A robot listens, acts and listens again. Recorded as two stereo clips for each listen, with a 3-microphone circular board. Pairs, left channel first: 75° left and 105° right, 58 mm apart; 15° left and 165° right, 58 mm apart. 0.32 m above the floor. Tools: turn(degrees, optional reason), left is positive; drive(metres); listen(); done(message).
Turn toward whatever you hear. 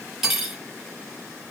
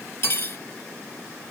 turn(degrees=-20, reason="The cutlery clinking: 20° right.")
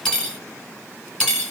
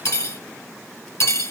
done("Found it: cutlery clinking, straight ahead.")